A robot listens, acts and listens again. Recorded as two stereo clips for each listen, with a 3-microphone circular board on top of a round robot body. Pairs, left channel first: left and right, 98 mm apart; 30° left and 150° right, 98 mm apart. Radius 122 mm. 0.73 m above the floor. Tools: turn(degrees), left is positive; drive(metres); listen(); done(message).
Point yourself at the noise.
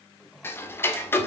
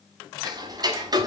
turn(degrees=155)
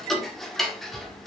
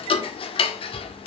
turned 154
done("Found it: ticking, straight ahead.")